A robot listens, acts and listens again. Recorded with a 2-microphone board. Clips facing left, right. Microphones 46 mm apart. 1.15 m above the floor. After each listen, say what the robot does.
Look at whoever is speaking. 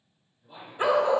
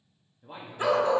Turn 45° right.
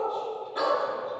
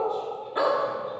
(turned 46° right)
Keep listening.
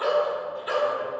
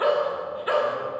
Keep listening.
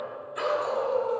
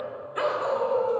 I heard a man speaking, but can't make it out now. It was about 5° left or 90° right.